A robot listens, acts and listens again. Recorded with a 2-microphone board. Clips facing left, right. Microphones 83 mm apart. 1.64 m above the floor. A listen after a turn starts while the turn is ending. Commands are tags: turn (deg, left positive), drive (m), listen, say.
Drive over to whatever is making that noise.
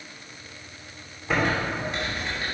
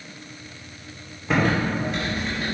<turn deg="30"/>
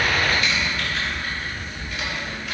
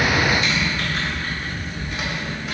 <turn deg="-30"/>
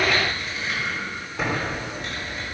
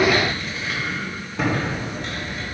<drive m="1.0"/>
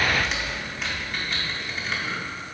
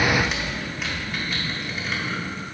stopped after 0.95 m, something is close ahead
<say>Arrived at the typing on a keyboard, straight ahead.</say>